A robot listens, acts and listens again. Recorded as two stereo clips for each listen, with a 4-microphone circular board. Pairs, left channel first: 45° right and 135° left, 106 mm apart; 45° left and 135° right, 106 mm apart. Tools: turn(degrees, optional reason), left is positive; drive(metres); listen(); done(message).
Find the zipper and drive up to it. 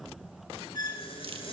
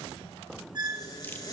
turn(degrees=-10, reason="The zipper: 10° right.")
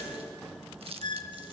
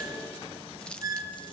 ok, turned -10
listen()
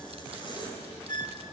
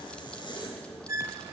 drive(metres=1.0)
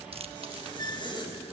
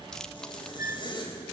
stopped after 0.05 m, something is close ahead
done("Blocked. The zipper is further on, straight ahead.")